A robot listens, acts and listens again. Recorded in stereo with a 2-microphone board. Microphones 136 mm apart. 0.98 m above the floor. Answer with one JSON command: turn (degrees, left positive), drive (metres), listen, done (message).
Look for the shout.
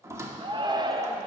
{"turn": -35}
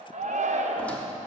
{"turn": -110}
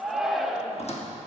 {"done": "Facing the shout."}